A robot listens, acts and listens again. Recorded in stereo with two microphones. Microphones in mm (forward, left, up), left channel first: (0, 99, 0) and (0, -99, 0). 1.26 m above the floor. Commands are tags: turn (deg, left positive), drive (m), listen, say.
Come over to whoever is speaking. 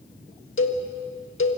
<listen/>
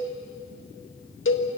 <listen/>
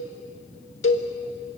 <say>I can't make out anyone speaking, only a cowbell.</say>